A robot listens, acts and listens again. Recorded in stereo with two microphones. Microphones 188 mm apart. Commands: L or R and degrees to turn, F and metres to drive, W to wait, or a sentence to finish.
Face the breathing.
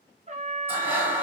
R30
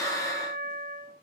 L20
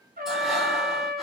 W
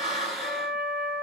Facing the breathing, 1 to 2 m away.